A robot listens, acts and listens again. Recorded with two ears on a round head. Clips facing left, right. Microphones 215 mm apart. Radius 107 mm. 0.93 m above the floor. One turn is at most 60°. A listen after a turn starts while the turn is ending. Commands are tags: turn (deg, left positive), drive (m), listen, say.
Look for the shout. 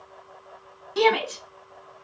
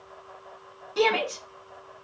<turn deg="35"/>
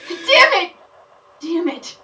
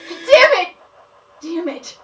<turn deg="60"/>
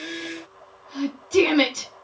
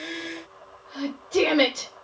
<turn deg="60"/>
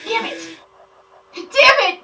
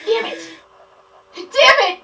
<turn deg="20"/>
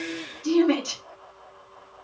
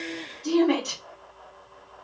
<say>Facing the shout, 2 to 4 m away.</say>